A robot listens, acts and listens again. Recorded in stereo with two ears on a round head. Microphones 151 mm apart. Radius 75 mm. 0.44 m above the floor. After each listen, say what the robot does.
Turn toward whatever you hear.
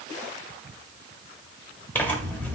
Turn 30° left.
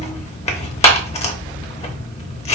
Turn 135° left.
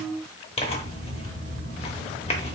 Turn 40° left.
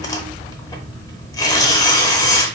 Turn 25° left.
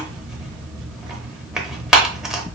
Found it: tearing paper, straight ahead, under 1 m away.